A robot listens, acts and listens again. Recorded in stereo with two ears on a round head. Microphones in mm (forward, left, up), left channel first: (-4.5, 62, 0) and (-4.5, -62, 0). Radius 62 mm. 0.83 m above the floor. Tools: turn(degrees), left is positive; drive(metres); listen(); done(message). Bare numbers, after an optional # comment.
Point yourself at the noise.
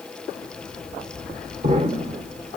# The explosion: about 50° right or 130° right.
turn(-50)
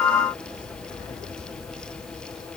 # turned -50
listen()
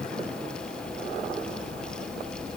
done("I heard an explosion, but can't make it out now. It was about straight ahead or 80° right.")